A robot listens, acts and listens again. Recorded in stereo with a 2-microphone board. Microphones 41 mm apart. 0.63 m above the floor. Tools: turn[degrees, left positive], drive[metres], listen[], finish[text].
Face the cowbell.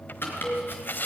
Action: turn[30]
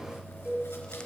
Thought: So it is at 25° right.
Action: turn[-25]
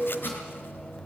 Thought: The cowbell is now 15° left.
Action: turn[15]
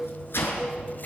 Action: finish[Facing the cowbell, over 4 m away.]